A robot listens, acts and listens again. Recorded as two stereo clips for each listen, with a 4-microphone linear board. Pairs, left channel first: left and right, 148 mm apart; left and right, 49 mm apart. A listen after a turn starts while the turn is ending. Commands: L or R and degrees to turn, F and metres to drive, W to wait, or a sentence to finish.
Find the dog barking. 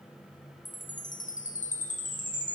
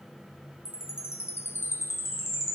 W
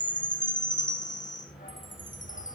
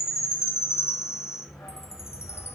L90
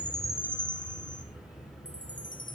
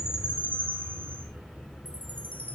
L25
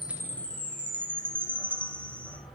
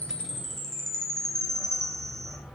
Facing the dog barking, over 4 m away.